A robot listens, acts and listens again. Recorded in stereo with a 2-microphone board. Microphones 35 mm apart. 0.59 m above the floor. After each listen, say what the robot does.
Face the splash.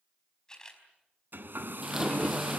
Turn 30° right.
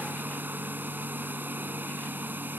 Keep listening.
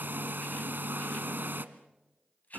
I heard a splash, but can't make it out now. It was about 20° left or 140° right.